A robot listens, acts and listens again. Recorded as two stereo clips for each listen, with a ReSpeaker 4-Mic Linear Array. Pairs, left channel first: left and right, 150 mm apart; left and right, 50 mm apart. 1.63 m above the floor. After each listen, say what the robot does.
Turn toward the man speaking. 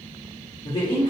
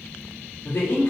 Turn 75° left.
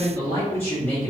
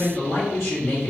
Turn 10° left.
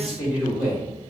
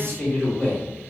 Found it: a man speaking, straight ahead.